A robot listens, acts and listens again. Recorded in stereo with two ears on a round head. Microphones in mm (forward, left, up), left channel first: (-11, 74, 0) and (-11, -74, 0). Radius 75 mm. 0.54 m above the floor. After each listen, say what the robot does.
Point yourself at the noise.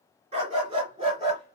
Turn 30° right.
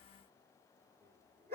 Turn 135° right.
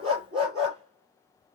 Turn 35° right.
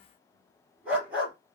Turn 10° right.
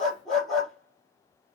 Found it: a dog barking, straight ahead, 2 to 4 m away.